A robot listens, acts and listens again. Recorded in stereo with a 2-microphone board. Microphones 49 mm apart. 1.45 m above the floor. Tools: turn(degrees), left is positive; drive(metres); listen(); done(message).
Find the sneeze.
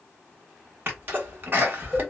turn(degrees=-40)
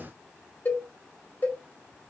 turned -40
listen()
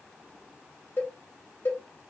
done("I heard a sneeze, but can't make it out now. It was about straight ahead or 100° right.")